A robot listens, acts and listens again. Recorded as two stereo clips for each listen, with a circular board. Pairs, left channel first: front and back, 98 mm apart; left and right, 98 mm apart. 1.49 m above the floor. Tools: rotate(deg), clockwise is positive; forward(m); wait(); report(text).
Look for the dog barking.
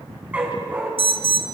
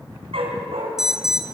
rotate(105)
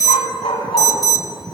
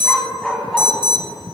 report("Found it: a dog barking, straight ahead, over 4 m away.")